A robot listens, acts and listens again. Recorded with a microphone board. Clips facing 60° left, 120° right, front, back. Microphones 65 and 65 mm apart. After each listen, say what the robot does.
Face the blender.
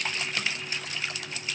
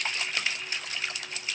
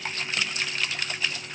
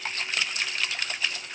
Keep listening.
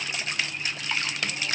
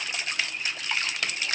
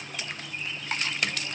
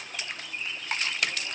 Keep listening.
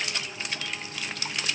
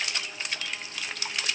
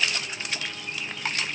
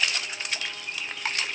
I can't make out a blender to turn to.